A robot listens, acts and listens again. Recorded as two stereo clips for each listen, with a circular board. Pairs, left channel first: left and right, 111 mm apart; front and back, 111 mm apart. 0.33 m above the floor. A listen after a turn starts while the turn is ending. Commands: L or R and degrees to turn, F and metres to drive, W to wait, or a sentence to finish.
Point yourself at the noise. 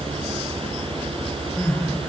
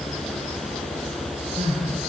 L165
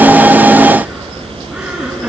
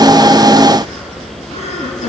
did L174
R10
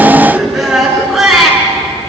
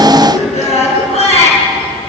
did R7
Found it: crying, straight ahead.